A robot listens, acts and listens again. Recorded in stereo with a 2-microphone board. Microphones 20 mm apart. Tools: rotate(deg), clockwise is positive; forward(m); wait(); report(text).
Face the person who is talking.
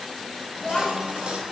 rotate(-45)
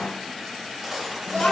rotate(-85)
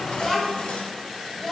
rotate(-10)
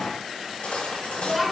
report("Facing the child speaking, 1 to 2 m away.")